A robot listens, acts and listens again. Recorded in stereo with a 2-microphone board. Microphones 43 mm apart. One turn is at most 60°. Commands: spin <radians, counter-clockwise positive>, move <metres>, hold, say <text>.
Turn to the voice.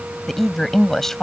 spin 0.52
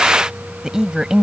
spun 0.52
spin -0.17
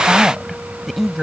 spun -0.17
say Found it: a woman speaking, straight ahead.